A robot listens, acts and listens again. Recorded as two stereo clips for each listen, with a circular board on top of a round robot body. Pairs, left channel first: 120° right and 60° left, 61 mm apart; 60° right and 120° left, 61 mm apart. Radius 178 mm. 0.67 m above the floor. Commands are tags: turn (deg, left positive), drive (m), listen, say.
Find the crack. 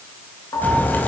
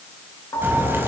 <turn deg="175"/>
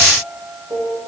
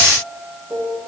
<say>Facing where the crack came from. I can't hear it now.</say>